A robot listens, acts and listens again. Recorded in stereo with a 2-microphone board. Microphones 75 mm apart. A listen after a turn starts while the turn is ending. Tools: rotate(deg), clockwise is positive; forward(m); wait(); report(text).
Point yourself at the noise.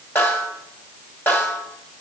rotate(-30)
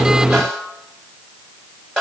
report("Found it: a snare drum, straight ahead.")